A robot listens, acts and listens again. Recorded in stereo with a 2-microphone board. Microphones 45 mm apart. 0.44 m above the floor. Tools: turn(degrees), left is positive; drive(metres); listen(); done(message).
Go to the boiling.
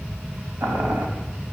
turn(degrees=-55)
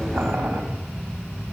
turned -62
turn(degrees=-60)
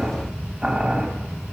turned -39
turn(degrees=-20)
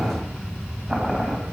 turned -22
drive(metres=1.0)
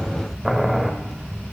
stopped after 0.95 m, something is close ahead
done("Arrived at the boiling, straight ahead.")